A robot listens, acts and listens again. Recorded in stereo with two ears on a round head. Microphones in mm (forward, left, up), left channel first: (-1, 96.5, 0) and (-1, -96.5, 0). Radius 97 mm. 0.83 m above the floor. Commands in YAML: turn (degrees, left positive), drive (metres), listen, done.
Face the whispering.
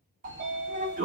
listen: true
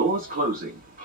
listen: true
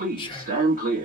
turn: 20
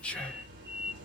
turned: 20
done: "Facing the whispering."